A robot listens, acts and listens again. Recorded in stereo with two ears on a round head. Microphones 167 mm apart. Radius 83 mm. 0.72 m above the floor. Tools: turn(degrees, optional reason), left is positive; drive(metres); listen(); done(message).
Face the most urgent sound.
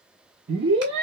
turn(degrees=-65, reason="The scream: about 65° right or 115° right.")
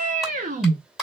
turn(degrees=-45, reason="So it is at 45° right.")
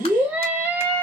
turn(degrees=-10, reason="The scream is now 10° right.")
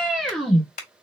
done("Found it: a scream, straight ahead, 1 to 2 m away.")